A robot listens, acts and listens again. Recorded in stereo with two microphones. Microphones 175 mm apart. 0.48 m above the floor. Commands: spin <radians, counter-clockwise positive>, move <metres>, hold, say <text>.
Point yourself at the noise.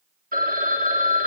spin -0.96
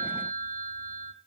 spin -1.05
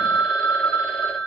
say Facing the phone ringing.